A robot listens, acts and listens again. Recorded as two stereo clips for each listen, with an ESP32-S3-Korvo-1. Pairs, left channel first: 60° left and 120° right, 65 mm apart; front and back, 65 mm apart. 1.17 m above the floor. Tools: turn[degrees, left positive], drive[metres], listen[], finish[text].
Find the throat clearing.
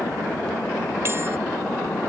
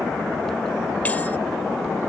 Action: listen[]
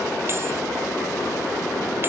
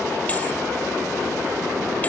Action: listen[]
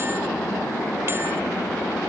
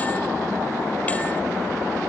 Action: finish[I can't make out throat clearing.]